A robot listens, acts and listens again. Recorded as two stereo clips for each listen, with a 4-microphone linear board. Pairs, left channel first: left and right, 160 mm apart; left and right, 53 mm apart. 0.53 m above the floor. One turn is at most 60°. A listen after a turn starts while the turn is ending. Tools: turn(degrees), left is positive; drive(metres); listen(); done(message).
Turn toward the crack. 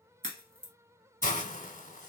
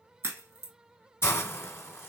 turn(degrees=-60)
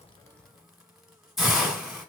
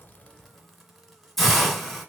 listen()
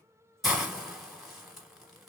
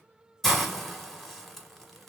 done("I heard a crack, but can't make it out now. It was about straight ahead or 60° right.")